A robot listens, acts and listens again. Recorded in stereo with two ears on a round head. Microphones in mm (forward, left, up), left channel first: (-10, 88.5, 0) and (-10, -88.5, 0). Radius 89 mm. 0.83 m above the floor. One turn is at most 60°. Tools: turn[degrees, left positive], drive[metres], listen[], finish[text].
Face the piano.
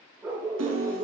Thought: The piano: about 70° right or 110° right.
Action: turn[-60]
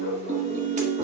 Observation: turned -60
Thought: So it is at 40° right.
Action: turn[-40]
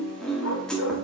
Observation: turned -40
Action: finish[Facing the piano.]